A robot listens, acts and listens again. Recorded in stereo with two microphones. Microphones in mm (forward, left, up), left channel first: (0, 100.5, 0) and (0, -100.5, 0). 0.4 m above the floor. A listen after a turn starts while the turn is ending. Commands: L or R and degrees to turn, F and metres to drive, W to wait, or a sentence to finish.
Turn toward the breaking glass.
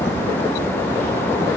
W
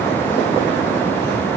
W
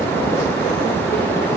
I can't make out breaking glass to turn to.